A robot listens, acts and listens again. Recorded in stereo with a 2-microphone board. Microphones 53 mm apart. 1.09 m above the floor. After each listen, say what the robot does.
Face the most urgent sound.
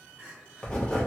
Turn 30° right.
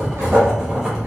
Keep listening.
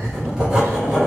Keep listening.
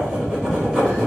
I heard crying, but can't make it out now. It was about straight ahead or 120° right.